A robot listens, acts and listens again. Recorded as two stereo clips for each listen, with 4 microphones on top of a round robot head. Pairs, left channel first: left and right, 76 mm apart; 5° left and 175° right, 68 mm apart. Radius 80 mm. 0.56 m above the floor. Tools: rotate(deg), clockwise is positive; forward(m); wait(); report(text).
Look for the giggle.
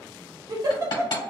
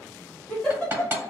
rotate(70)
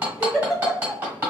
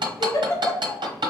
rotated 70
report("Facing the giggle, 1 to 2 m away.")